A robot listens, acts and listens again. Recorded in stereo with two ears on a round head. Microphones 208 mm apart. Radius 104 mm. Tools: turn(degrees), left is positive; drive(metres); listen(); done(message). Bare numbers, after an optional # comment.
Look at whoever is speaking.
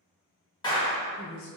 # The woman speaking: about 60° left or 120° left.
turn(60)
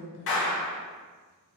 # So it is at 45° left.
turn(45)
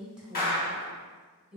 done("Facing the woman speaking, 1 to 2 m away.")